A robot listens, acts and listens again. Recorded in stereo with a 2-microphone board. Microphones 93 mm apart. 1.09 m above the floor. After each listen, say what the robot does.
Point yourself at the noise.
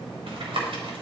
Turn 70° right.
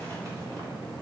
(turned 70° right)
Keep listening.
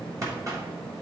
Turn 35° right.
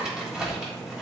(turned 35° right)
Found it: tapping, straight ahead, 2 to 4 m away.